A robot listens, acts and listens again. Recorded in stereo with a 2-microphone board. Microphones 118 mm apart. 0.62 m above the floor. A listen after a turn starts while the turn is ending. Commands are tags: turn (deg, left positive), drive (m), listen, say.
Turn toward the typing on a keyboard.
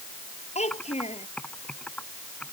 <turn deg="30"/>
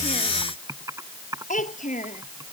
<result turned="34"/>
<turn deg="-25"/>
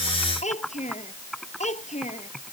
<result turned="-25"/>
<say>Facing the typing on a keyboard.</say>